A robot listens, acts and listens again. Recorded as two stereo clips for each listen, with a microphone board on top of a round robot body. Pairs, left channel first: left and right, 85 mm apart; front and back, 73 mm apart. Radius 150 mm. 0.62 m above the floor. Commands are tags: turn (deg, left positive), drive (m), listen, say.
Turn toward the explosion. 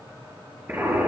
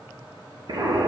<turn deg="-160"/>
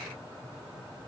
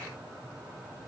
<say>Facing where the explosion came from. I can't hear it now.</say>